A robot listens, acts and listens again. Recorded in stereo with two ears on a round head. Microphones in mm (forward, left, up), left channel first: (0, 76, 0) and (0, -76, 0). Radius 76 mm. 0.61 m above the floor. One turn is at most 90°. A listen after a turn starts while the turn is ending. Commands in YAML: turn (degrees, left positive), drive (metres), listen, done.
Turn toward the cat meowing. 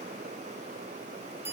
listen: true
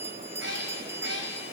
turn: -90
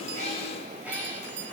turn: -10
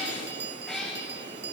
done: "Facing the cat meowing, over 4 m away."